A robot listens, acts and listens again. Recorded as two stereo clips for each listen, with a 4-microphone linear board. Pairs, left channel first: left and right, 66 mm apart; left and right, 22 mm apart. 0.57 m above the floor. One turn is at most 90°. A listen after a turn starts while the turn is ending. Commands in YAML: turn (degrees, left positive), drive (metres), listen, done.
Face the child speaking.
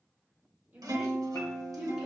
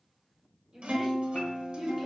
turn: -15
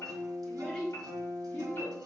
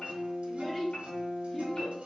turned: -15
turn: 15
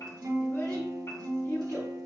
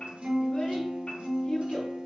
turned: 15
listen: true
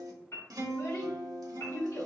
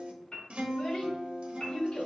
turn: 70
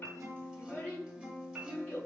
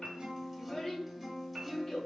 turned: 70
turn: 25
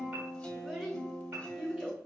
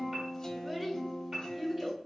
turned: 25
done: "Found it: a child speaking, straight ahead."